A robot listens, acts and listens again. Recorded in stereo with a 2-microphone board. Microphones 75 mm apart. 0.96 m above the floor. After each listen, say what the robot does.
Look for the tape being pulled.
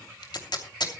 Turn 75° left.
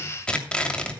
Turn 15° left.
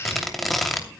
Facing the tape being pulled, 2 to 4 m away.